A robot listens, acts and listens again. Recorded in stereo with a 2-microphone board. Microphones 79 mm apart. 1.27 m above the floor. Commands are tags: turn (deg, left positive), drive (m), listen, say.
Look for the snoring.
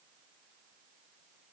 <listen/>
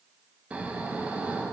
<turn deg="-15"/>
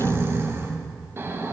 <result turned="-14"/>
<turn deg="-150"/>
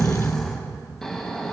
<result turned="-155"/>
<say>Facing the snoring.</say>